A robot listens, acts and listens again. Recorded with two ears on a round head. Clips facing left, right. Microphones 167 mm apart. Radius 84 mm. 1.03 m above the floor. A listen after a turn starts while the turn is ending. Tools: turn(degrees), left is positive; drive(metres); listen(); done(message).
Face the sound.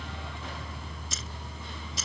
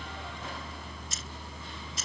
turn(degrees=65)
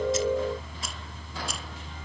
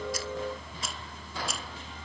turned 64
listen()
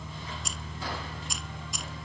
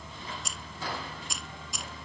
done("Facing the keys jangling.")